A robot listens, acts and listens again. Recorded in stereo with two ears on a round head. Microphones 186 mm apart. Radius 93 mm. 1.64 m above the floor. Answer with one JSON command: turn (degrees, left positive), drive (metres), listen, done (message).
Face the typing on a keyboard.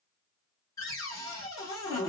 {"listen": true}
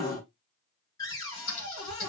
{"turn": 65}
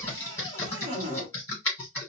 {"turn": 10}
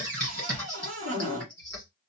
{"done": "Facing the typing on a keyboard, 1 to 2 m away."}